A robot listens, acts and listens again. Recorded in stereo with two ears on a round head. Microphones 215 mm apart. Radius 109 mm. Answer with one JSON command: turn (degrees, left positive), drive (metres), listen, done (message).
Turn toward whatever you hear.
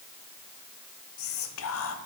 {"turn": 65}
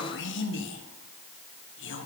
{"turn": 50}
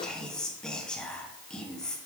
{"done": "Facing the whispering, under 1 m away."}